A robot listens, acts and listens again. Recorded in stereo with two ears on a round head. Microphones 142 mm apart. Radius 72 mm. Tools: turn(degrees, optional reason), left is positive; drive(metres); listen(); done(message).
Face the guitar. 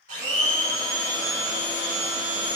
listen()
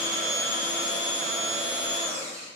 listen()
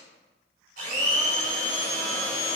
done("I can't make out a guitar to turn to.")